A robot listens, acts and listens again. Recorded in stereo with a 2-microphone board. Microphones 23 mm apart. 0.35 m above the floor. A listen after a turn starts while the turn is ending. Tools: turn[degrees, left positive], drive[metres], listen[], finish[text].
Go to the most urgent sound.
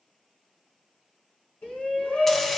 Thought: The shout: about 55° left or 125° left.
Action: turn[55]
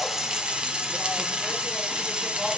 Action: listen[]
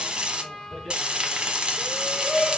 Thought: So it is at 10° left.
Action: turn[10]
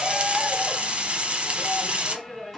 Action: drive[1.0]
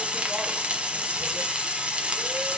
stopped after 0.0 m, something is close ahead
Action: listen[]
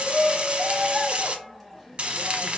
Action: finish[Something is in my way. I am facing the shout but have not reached it.]